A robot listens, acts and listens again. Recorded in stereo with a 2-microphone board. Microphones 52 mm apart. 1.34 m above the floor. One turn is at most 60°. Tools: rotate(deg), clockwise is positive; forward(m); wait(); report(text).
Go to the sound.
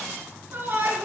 rotate(45)
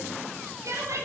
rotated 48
rotate(60)
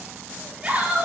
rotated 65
rotate(25)
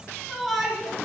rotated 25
forward(1.0)
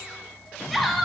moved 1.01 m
forward(1.0)
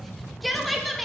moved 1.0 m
forward(1.0)
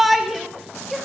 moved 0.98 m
forward(1.0)
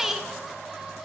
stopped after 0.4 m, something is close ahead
report("Arrived at the shout, straight ahead.")